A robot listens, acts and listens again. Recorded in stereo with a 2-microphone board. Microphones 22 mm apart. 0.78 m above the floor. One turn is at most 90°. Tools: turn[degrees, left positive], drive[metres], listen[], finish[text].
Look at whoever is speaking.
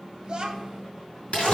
Thought: The child speaking: about 35° right or 145° right.
Action: turn[-35]
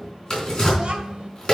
Thought: The child speaking: about 45° right or 135° right.
Action: turn[-45]
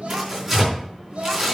Thought: So it is at 115° right.
Action: turn[-90]
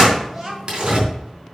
Thought: The child speaking is now 10° right.
Action: turn[-10]
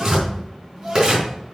Action: finish[Facing the child speaking, 2 to 4 m away.]